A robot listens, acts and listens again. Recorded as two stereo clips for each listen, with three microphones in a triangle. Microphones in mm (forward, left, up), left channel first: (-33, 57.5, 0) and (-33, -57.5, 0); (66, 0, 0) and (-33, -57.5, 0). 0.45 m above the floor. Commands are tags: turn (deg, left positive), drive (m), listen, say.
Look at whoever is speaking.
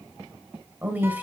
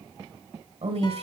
<turn deg="-165"/>
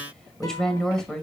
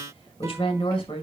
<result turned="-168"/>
<say>Facing the woman speaking.</say>